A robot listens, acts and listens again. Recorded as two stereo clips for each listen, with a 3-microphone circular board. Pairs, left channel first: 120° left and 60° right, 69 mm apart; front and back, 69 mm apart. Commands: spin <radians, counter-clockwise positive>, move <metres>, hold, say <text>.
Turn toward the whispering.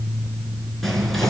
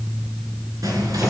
spin -2.71
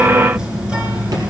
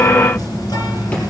spin 0.26
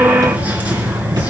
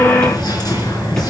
say Found it: whispering, straight ahead.